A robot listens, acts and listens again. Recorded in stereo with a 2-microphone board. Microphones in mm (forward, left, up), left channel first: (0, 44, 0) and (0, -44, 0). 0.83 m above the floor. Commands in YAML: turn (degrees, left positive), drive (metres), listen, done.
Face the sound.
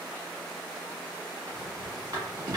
turn: -45
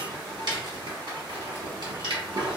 turn: -80
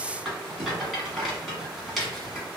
done: "Facing the rattle, 1 to 2 m away."